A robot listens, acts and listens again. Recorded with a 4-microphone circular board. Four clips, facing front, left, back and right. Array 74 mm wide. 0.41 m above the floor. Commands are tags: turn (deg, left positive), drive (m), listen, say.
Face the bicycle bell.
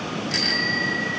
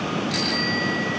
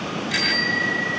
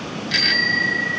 <turn deg="-120"/>
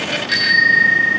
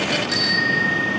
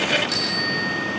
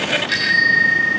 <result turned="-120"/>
<turn deg="-40"/>
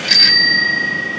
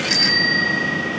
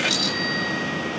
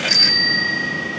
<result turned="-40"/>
<say>Found it: a bicycle bell, straight ahead, 2 to 4 m away.</say>